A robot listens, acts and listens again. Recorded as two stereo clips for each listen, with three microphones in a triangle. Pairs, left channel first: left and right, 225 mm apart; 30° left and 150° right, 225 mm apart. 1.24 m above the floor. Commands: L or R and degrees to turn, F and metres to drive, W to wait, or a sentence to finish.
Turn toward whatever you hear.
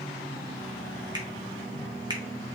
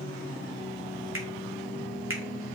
R160
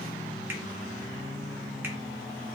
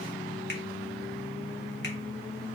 W
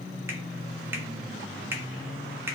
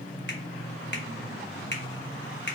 R10
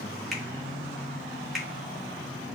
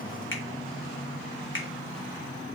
Found it: a finger snap, straight ahead.